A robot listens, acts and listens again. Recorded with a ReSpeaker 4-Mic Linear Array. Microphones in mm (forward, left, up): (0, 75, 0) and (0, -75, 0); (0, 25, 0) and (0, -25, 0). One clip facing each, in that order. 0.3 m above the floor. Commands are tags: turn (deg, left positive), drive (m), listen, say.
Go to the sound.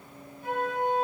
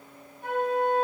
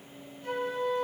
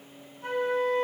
<turn deg="-55"/>
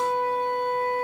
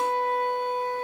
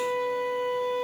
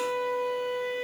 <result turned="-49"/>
<turn deg="-15"/>
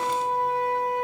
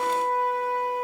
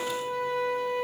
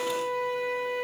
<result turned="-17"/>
<drive m="1.0"/>
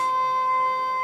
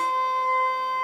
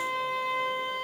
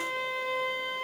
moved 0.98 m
<drive m="1.0"/>
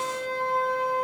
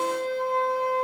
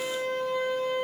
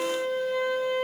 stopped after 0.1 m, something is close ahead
<say>I am next to the flute.</say>